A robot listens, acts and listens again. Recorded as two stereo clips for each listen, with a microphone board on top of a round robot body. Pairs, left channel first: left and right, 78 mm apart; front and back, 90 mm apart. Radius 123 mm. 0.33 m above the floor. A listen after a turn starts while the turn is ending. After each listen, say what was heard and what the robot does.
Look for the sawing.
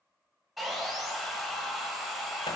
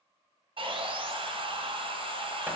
The sawing: straight behind. Turn 180° left.
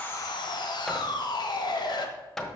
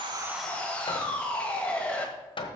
The sawing is now 75° left. Turn 75° left.
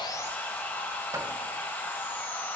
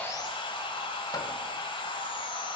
The sawing is now 25° left. Turn 25° left.
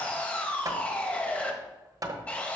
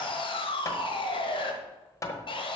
The sawing is now 20° left. Turn 20° left.
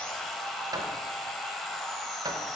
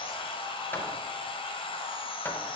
Found it: sawing, straight ahead, 1 to 2 m away.